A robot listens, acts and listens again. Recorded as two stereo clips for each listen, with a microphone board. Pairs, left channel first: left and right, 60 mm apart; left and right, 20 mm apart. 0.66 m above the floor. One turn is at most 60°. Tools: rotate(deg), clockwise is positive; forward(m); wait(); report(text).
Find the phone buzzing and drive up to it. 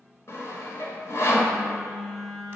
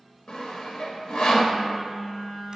rotate(-30)
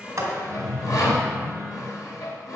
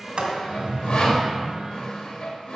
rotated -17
wait()
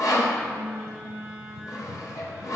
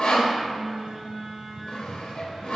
rotate(15)
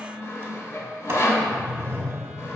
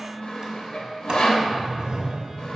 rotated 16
forward(1.0)
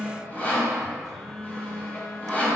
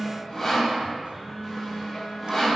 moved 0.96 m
forward(1.0)
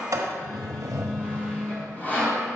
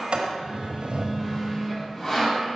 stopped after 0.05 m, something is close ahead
report("I am next to the phone buzzing.")